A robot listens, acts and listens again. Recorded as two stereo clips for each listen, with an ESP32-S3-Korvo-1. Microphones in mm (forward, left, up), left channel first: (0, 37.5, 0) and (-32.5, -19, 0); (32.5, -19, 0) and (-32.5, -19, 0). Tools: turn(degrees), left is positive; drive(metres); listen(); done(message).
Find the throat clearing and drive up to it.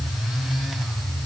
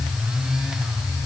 listen()
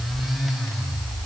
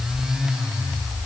listen()
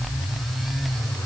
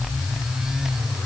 done("I can't make out throat clearing to turn to.")